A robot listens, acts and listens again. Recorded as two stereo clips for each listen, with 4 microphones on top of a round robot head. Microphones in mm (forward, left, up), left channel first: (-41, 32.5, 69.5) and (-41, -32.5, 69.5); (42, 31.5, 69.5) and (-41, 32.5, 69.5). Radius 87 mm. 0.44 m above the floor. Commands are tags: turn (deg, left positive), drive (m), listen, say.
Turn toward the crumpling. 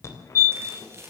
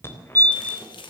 <turn deg="-35"/>
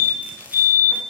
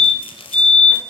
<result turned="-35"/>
<turn deg="-15"/>
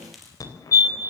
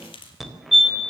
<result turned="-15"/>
<say>Found it: crumpling, straight ahead, 2 to 4 m away.</say>